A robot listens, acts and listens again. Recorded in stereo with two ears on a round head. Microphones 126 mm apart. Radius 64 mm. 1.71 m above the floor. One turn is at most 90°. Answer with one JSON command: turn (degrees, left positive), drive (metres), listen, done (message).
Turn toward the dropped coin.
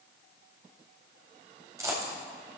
{"turn": -25}
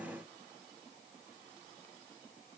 {"listen": true}
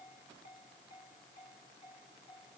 {"done": "I heard a dropped coin, but can't make it out now. It was about straight ahead or 130° right."}